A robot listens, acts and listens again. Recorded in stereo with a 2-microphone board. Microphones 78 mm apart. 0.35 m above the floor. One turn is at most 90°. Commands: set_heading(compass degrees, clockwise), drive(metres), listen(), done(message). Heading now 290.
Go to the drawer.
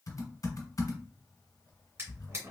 set_heading(325)
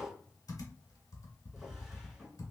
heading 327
drive(1.0)
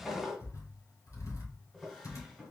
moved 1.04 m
drive(1.0)
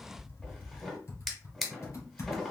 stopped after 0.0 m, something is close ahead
done("Arrived at the drawer, straight ahead.")